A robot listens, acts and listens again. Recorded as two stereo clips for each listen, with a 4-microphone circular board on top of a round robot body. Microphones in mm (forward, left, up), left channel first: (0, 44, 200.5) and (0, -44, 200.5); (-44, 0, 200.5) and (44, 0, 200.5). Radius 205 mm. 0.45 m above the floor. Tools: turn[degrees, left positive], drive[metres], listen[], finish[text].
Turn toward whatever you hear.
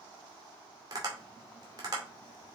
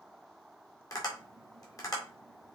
Thought: The tapping: 135° right.
Action: turn[-135]
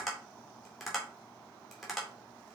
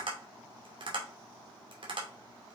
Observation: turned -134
Action: finish[Found it: tapping, straight ahead, 2 to 4 m away.]